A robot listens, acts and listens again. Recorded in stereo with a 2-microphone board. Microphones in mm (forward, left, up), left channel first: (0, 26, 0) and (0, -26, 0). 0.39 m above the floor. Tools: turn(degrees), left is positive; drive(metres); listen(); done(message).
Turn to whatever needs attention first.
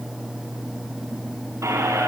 listen()
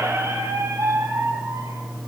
listen()
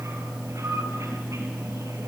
done("I can't make out anything urgent to turn to.")